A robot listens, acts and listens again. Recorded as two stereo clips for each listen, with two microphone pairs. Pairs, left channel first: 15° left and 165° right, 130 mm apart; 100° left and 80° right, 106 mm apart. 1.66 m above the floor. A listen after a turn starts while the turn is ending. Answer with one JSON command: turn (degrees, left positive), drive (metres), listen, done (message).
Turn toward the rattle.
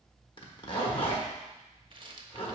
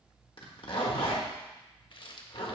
{"turn": 140}
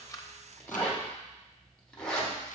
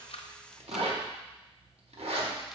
{"listen": true}
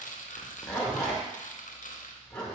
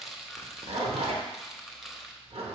{"turn": 10}
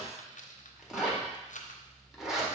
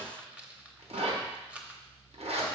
{"done": "Facing the rattle."}